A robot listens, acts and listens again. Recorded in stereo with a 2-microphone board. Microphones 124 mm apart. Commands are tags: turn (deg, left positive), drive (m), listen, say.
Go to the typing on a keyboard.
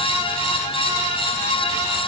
<listen/>
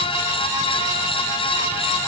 <listen/>
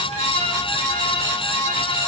<say>I can't make out typing on a keyboard.</say>